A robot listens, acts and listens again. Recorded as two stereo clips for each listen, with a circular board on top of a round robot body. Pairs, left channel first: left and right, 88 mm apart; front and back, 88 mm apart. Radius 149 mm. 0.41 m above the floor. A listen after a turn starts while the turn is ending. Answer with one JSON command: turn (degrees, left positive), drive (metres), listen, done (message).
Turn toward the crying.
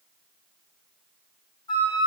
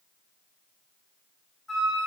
{"listen": true}
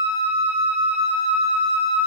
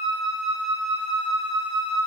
{"listen": true}
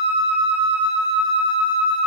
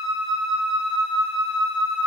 {"done": "I can't make out crying to turn to."}